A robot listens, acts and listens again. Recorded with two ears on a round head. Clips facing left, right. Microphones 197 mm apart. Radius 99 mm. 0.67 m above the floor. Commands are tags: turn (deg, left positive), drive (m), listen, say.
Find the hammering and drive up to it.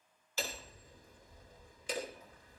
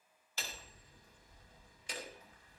<turn deg="70"/>
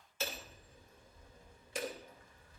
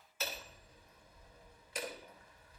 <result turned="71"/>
<turn deg="25"/>
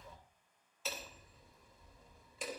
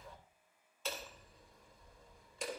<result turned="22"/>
<drive m="1.0"/>
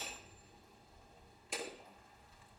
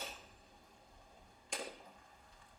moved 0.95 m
<drive m="1.0"/>
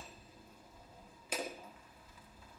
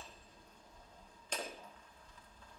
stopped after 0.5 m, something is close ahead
<turn deg="10"/>
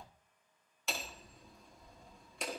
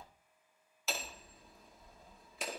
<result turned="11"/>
<say>Arrived at the hammering, straight ahead.</say>